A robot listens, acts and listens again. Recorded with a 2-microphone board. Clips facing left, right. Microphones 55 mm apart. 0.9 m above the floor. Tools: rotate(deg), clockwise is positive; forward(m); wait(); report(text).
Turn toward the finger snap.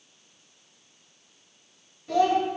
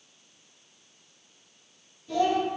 wait()
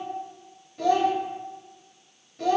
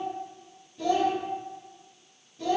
wait()
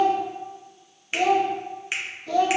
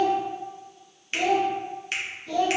rotate(-30)
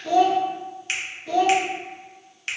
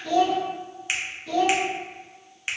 rotate(15)
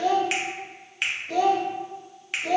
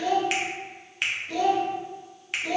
report("Facing the finger snap, under 1 m away.")